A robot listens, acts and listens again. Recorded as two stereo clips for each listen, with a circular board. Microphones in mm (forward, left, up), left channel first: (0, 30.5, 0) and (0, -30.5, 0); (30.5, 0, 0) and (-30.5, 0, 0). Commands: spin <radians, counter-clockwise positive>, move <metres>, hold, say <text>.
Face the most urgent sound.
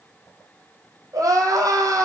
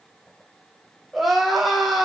spin -1.57
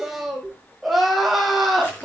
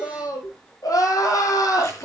say Found it: crying, straight ahead, 2 to 4 m away.